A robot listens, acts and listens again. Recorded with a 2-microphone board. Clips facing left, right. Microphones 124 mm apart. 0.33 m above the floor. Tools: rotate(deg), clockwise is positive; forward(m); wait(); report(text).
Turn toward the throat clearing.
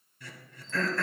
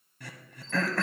rotate(65)
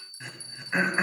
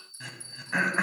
rotate(10)
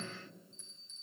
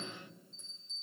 wait()
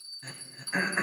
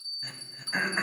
report("Facing the throat clearing.")